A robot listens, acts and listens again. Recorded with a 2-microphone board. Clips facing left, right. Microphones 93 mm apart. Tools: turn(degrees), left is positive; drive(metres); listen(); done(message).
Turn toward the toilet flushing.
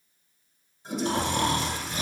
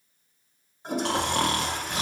turn(degrees=-55)
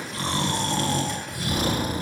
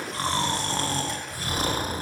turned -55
listen()
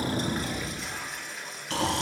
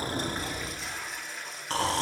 done("Facing the toilet flushing, under 1 m away.")